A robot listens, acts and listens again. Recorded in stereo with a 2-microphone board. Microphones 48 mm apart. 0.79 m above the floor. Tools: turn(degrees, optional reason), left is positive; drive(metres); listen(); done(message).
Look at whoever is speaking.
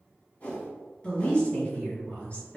turn(degrees=25, reason="The woman speaking: about 25° left or 155° left.")
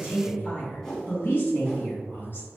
turn(degrees=125, reason="So it is at 125° left.")
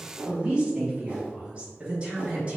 turn(degrees=-30, reason="The woman speaking is now 30° right.")
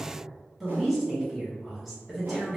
done("Found it: a woman speaking, straight ahead.")